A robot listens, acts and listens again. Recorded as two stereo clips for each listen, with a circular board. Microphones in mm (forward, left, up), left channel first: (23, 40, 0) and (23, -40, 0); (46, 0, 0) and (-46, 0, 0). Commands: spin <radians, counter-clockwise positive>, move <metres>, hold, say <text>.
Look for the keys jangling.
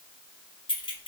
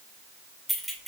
spin 1.57
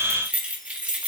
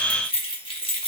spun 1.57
spin -0.26
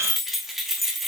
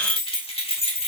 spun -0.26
say Found it: keys jangling, straight ahead.